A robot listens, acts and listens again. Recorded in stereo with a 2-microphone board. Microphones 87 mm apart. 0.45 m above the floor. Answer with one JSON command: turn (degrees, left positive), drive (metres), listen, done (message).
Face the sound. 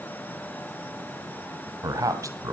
{"turn": -40}
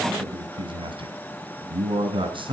{"turn": -105}
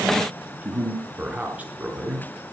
{"turn": -15}
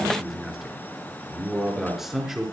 {"done": "Facing the man speaking."}